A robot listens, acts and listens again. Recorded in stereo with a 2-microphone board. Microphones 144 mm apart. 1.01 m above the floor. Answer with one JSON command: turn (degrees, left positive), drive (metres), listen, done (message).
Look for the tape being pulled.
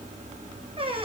{"listen": true}
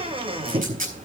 {"turn": -70}
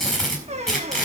{"done": "Found it: tape being pulled, straight ahead."}